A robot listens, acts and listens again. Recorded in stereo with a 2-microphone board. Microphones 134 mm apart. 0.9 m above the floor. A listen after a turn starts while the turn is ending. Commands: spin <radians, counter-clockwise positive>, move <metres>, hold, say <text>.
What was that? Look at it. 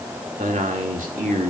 spin -1.57
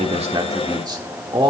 spin -0.70
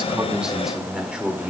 spin -0.17
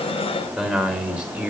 spin -0.17
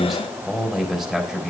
say Facing the man speaking.